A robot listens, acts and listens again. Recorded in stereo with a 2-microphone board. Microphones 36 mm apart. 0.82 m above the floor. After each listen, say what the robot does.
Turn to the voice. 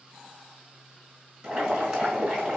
Keep listening.
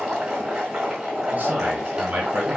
Turn 45° right.
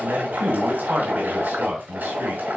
Turn 90° right.
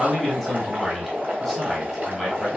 Turn 20° right.
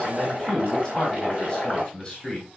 Found it: a man speaking, straight ahead.